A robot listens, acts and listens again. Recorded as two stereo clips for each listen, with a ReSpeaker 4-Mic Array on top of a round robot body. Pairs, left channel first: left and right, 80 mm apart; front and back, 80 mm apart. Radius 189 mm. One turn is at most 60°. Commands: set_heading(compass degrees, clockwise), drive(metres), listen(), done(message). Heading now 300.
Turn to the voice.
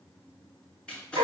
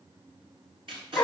listen()
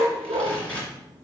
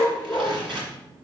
listen()
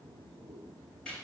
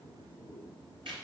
done("I can't make out anyone speaking to turn to.")